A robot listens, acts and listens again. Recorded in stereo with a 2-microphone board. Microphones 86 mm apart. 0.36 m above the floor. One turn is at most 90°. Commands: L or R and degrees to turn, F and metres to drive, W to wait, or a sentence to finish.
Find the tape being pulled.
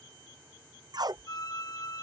R50
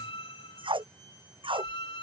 R80
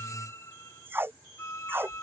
R25
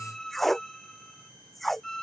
Found it: tape being pulled, straight ahead.